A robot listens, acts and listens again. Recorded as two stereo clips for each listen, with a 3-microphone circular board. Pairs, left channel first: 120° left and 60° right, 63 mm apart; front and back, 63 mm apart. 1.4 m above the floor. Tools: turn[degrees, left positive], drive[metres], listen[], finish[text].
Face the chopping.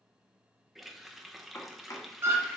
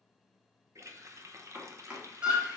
Thought: The chopping: 115° left.
Action: turn[115]
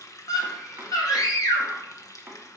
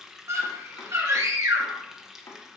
Action: finish[Facing the chopping, 1 to 2 m away.]